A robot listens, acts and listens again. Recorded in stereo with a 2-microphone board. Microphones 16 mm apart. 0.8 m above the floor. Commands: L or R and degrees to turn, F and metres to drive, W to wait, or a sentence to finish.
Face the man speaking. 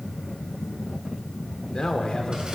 L65
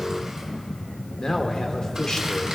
L45
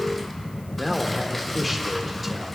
Facing the man speaking.